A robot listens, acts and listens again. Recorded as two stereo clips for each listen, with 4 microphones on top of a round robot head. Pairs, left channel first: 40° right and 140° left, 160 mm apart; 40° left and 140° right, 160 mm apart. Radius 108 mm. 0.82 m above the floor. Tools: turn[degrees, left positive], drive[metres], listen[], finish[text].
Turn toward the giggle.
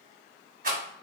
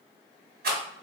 Action: listen[]
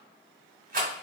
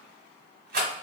Action: listen[]
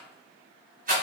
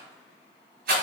Action: finish[I can't make out a giggle to turn to.]